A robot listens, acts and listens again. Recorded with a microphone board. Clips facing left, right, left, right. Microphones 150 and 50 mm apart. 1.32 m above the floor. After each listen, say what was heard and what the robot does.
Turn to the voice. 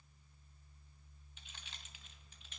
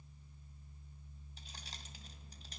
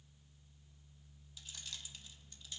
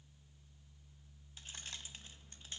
Keep listening.
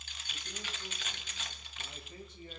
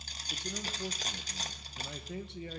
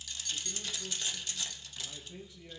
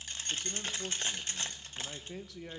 The man speaking: about 75° right or 105° right. Turn 75° right.
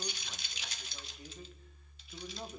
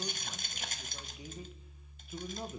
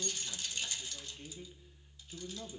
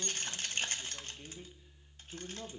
So it is at 10° right. Turn 10° right.
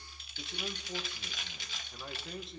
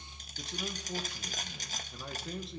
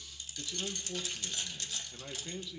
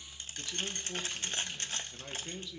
Found it: a man speaking, straight ahead.